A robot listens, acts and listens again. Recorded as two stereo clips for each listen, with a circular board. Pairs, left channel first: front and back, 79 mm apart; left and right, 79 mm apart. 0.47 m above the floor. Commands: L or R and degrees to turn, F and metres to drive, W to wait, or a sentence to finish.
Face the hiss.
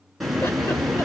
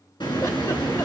L90
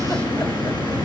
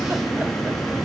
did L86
Facing the hiss.